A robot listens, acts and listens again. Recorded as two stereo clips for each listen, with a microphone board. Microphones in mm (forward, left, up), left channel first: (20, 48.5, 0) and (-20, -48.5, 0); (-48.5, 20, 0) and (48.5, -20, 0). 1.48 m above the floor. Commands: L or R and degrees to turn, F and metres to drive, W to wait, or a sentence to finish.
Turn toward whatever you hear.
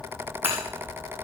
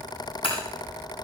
L180
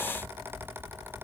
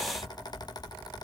Facing where the breaking glass came from. I can't hear it now.